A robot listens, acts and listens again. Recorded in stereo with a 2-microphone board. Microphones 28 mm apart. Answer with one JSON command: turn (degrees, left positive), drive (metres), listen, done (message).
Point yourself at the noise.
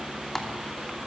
{"listen": true}
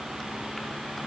{"listen": true}
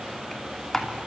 {"turn": 30}
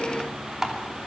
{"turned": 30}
{"turn": -20}
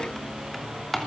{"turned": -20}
{"done": "Found it: typing on a keyboard, straight ahead, 2 to 4 m away."}